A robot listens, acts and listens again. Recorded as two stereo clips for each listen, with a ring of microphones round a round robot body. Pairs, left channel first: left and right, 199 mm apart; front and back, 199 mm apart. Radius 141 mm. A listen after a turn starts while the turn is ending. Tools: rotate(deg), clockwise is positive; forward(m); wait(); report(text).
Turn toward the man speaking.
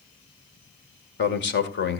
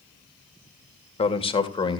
rotate(-65)
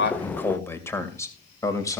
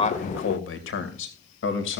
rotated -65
rotate(-15)
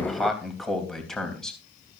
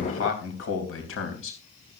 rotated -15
report("Found it: a man speaking, straight ahead.")